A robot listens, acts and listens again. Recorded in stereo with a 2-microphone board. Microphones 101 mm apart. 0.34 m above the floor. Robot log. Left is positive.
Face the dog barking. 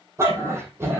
note: The dog barking: about 25° right or 155° right.
cmd yaw -25
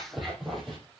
end: Found it: a dog barking, straight ahead, 2 to 4 m away.